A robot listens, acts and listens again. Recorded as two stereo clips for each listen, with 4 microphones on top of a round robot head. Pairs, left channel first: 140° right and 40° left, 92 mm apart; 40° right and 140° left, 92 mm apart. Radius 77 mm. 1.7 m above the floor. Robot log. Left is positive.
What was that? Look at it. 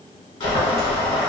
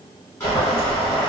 note: The boiling: 110° right.
cmd yaw -110
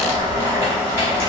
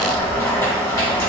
note: The boiling is now 10° left.
cmd yaw +10
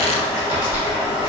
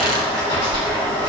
end: Found it: boiling, straight ahead.